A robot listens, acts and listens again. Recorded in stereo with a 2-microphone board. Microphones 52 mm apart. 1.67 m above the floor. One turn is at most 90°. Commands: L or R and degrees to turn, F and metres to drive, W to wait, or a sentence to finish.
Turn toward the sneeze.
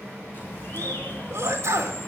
R60
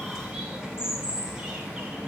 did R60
W
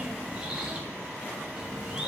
I heard a sneeze, but can't make it out now. It was about straight ahead or 60° right.